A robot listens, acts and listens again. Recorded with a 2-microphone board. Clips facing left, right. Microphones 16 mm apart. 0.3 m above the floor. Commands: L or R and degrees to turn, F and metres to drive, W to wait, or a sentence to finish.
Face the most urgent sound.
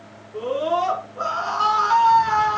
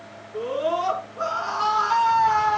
L25
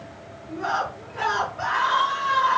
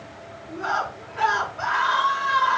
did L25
Facing the scream, over 4 m away.